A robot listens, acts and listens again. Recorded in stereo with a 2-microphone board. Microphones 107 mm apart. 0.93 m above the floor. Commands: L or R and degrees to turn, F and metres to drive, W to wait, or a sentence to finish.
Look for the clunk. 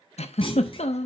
L55
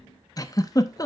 W
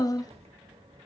I heard a clunk, but can't make it out now. It was about straight ahead or 70° left.